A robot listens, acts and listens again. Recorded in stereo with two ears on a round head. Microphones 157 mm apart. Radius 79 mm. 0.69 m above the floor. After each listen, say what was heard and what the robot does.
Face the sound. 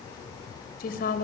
The woman speaking: about 55° left or 125° left. Turn 55° left.
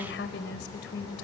So it is at 70° left. Turn 70° left.
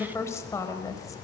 The woman speaking is now 20° left. Turn 20° left.
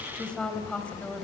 Facing the woman speaking.